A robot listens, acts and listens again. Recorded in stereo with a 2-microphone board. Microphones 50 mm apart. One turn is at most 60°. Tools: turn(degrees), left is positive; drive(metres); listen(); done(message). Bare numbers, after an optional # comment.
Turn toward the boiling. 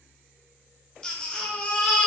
listen()
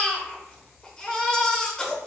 listen()
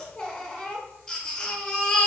done("I can't make out boiling to turn to.")